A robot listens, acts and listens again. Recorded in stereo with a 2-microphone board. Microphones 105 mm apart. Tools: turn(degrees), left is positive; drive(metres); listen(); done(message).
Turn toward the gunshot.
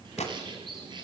turn(degrees=90)
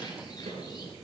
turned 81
turn(degrees=10)
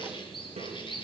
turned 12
done("Facing where the gunshot came from. I can't hear it now.")